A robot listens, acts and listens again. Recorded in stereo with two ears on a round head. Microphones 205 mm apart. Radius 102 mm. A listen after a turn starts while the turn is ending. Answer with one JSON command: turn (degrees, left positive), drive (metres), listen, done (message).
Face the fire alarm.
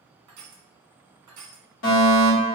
{"turn": 60}
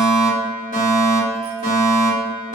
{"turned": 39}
{"turn": 45}
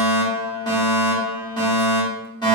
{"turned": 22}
{"turn": 20}
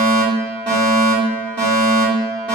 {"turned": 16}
{"done": "Facing the fire alarm, 1 to 2 m away."}